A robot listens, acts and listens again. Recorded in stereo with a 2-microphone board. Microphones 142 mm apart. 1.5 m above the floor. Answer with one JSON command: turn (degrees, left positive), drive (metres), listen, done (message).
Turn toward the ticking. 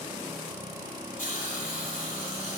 {"listen": true}
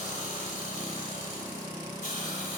{"listen": true}
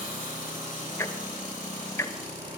{"turn": 20}
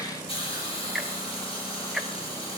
{"done": "Found it: ticking, straight ahead."}